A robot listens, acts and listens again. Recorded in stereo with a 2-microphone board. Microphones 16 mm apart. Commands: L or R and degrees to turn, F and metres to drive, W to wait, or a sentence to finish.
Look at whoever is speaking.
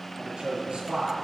R90
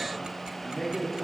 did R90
L10
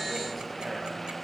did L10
W
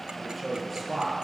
Found it: a man speaking, straight ahead.